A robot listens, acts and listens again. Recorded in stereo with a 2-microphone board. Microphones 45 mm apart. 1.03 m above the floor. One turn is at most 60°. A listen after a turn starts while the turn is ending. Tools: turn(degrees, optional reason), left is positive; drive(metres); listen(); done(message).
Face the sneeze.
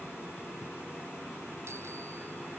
listen()
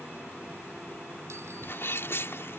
turn(degrees=60, reason="The sneeze: about 65° left or 115° left.")
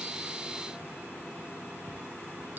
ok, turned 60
listen()
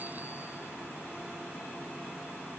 done("I heard a sneeze, but can't make it out now. It was about 5° left or 55° left.")